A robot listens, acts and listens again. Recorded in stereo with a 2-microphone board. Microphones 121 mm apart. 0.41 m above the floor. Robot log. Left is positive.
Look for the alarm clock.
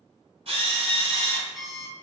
cmd yaw +30
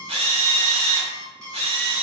note: So it is at 30° right.
cmd yaw -30
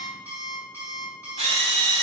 note: The alarm clock is now 15° right.
cmd yaw -15
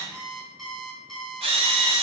end: Found it: an alarm clock, straight ahead, 1 to 2 m away.